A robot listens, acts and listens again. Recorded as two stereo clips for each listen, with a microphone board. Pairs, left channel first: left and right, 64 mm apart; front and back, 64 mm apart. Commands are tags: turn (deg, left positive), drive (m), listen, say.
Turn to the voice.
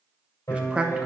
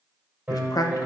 <turn deg="-20"/>
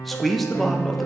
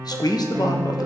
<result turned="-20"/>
<say>Found it: a man speaking, straight ahead, 1 to 2 m away.</say>